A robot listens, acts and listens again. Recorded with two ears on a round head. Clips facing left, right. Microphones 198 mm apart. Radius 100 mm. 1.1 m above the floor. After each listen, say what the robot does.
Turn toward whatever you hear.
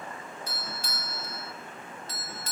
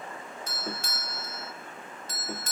Turn 40° right.
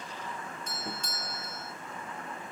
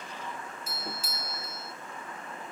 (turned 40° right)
Found it: a doorbell, straight ahead.